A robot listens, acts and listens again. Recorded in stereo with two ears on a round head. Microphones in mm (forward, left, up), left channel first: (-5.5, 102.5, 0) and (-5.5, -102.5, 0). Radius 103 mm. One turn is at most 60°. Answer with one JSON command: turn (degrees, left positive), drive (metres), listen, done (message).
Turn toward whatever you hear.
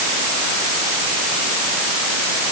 {"listen": true}
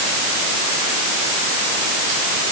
{"listen": true}
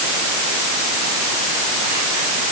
{"done": "I can't make out anything to turn to."}